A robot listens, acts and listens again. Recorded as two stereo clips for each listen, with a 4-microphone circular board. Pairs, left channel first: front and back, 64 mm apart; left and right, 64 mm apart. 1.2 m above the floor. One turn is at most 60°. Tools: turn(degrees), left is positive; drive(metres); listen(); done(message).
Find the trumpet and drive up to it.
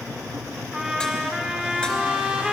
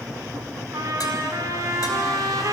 turn(degrees=-60)
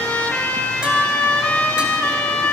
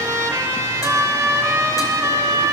turn(degrees=-60)
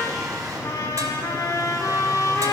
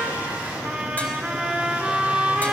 turn(degrees=-15)
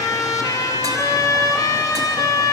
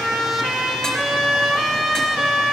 drive(metres=1.0)
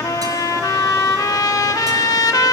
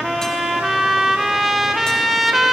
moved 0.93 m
drive(metres=1.0)
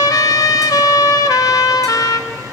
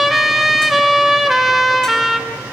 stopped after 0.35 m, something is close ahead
done("I am next to the trumpet.")